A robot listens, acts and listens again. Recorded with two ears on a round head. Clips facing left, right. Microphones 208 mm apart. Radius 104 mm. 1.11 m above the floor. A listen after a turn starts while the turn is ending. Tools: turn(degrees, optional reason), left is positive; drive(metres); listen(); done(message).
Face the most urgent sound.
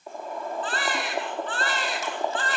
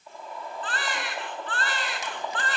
turn(degrees=90)
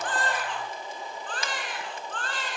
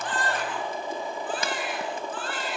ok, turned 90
done("Found it: a baby crying, straight ahead.")